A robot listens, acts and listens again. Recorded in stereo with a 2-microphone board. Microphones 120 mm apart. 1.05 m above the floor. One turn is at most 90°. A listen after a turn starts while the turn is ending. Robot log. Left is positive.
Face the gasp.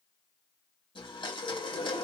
cmd yaw +90
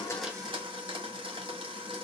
end: I heard a gasp from this way, but can't make it out now.